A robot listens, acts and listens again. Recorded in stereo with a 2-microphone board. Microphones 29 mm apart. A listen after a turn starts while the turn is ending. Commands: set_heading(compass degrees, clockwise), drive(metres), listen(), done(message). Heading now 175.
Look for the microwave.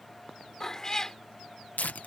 listen()
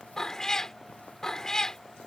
listen()
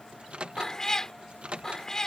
set_heading(220)
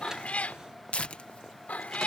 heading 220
listen()
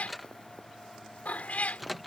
done("Facing the microwave.")